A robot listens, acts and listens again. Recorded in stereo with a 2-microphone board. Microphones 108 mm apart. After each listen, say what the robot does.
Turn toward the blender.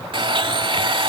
Turn 55° right.
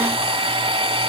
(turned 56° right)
Turn 65° right.
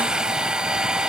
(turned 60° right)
Turn 10° right.
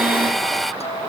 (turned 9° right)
Found it: a blender, straight ahead.